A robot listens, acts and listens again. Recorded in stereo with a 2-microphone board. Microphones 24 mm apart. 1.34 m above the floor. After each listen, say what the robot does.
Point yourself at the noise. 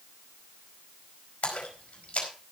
Turn 65° left.
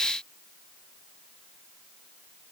Keep listening.
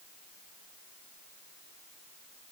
I heard a splash, but can't make it out now. It was about straight ahead or 50° left.